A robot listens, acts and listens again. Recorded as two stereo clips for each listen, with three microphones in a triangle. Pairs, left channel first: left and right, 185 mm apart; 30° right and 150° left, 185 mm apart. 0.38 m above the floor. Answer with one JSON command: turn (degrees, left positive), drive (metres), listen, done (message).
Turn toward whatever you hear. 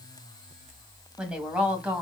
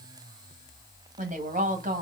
{"turn": -170}
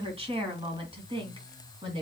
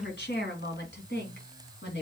{"turn": -30}
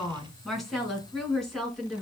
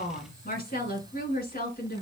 {"done": "Facing the woman speaking, 2 to 4 m away."}